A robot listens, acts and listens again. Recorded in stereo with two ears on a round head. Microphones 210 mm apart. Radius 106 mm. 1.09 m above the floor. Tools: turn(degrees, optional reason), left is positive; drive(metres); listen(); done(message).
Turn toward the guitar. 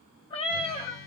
turn(degrees=60, reason="The guitar: about 60° left or 120° left.")
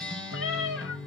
done("Found it: a guitar, straight ahead.")